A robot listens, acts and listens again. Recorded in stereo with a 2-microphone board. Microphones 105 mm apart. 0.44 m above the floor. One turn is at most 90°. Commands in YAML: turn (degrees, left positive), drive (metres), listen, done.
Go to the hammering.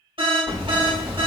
turn: -30
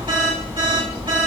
turn: -90
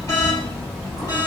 drive: 1.0
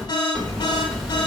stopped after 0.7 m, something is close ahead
done: "Arrived at the hammering, straight ahead."